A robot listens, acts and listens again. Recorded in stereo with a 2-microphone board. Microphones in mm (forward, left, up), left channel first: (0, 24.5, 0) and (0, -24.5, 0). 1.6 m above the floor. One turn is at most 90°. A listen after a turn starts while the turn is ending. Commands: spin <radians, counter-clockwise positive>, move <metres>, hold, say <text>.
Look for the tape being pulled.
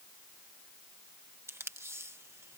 spin -0.96
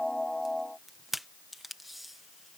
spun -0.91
say Found it: tape being pulled, straight ahead.